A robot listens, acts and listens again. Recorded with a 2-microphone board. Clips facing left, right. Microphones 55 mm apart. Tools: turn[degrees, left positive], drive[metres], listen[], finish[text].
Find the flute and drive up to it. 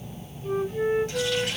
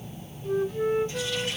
Thought: The flute: about 30° left or 150° left.
Action: turn[30]
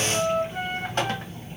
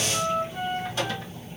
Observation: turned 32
Thought: So it is at 115° left.
Action: turn[115]
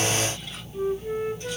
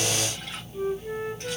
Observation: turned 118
Action: drive[1.0]
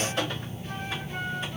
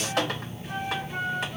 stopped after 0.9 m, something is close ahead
Thought: The flute is now 10° right.
Action: turn[-10]
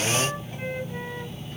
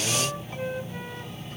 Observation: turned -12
Action: finish[Arrived at the flute, straight ahead.]